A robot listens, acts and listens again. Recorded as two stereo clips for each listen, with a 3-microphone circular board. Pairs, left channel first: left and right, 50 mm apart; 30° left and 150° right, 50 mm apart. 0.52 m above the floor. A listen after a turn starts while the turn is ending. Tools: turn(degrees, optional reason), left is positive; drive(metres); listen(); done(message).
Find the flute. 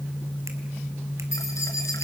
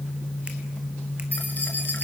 listen()
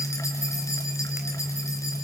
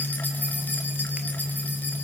listen()
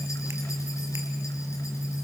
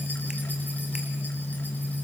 done("I can't make out a flute.")